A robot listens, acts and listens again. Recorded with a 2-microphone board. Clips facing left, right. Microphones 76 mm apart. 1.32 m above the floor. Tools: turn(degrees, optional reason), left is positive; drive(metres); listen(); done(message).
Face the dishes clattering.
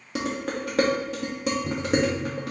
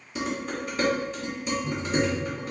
turn(degrees=75, reason="The dishes clattering: about 75° left or 105° left.")
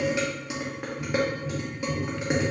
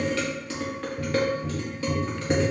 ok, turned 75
turn(degrees=15, reason="So it is at 15° left.")
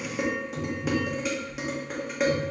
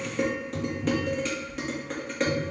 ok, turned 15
done("Facing the dishes clattering, 1 to 2 m away.")